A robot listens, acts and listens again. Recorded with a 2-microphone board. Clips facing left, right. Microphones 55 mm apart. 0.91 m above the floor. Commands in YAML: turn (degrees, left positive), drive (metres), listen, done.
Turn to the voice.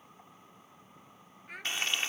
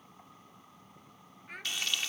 turn: 30
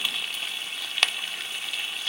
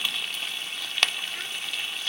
listen: true
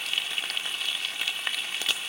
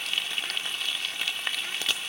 listen: true
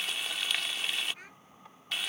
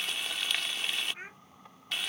turn: -30
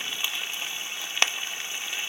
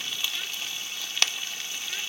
listen: true
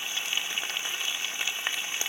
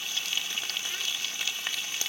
listen: true
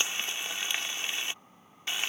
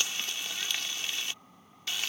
done: "Facing where the child speaking came from. I can't hear it now."